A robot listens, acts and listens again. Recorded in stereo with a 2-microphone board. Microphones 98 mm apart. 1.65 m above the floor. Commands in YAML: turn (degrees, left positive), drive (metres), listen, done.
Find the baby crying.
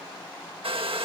listen: true
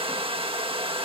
listen: true
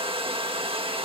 done: "I can't make out a baby crying, only a hair dryer."